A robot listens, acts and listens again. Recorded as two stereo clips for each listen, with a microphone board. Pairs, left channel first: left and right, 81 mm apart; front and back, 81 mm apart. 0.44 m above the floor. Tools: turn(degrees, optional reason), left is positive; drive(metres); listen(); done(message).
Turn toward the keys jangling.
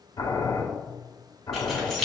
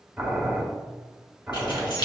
done("Found it: keys jangling, straight ahead, 2 to 4 m away.")